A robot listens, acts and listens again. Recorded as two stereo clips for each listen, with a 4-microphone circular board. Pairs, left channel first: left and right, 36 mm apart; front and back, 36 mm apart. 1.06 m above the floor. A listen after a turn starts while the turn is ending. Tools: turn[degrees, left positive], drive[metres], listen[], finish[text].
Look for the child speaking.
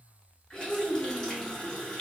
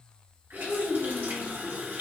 Thought: The child speaking: 25° left.
Action: turn[25]
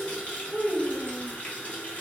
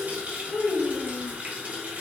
Action: finish[Facing the child speaking, under 1 m away.]